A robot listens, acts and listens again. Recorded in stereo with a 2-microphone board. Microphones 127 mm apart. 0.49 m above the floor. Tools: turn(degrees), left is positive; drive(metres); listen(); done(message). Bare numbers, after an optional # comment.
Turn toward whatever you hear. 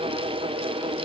listen()
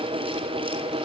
listen()
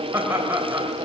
# The laughter: about 20° right or 160° right.
turn(-20)
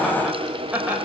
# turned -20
turn(-30)
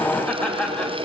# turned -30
# So it is at 10° left.
turn(10)
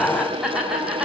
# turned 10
done("Found it: laughter, straight ahead, 2 to 4 m away.")